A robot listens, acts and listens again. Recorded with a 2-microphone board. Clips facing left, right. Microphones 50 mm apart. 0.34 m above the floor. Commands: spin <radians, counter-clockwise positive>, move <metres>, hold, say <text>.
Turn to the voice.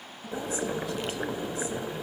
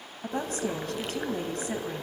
spin -0.87
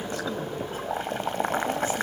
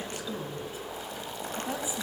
hold
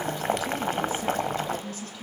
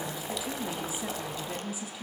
spin -0.17
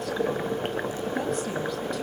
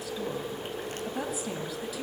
hold
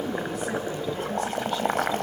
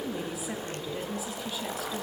hold
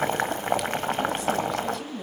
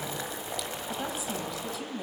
say Found it: a woman speaking, straight ahead, 2 to 4 m away.